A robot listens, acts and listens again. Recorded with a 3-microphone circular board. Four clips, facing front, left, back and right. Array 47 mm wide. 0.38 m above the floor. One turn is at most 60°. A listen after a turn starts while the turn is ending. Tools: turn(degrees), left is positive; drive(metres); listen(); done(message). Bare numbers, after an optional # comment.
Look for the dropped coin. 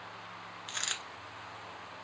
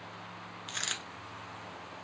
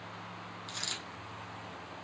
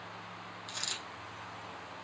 # The dropped coin: 50° left.
turn(50)
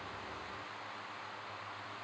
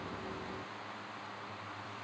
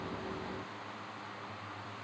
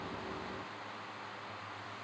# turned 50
done("I heard a dropped coin from this way, but can't make it out now.")